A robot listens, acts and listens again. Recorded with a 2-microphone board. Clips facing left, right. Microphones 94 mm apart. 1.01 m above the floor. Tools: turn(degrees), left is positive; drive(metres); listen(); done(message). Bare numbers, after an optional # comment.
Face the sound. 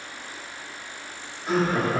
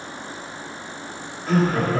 # The laughter: about 20° left or 160° left.
turn(20)
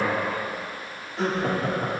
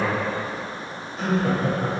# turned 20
# So it is at 120° left.
turn(120)
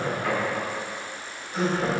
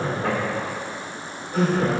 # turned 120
# The laughter is now 50° right.
turn(-50)
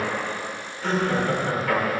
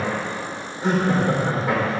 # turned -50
# The laughter is now 25° right.
turn(-25)
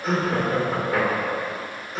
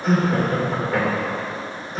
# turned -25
done("Facing the laughter.")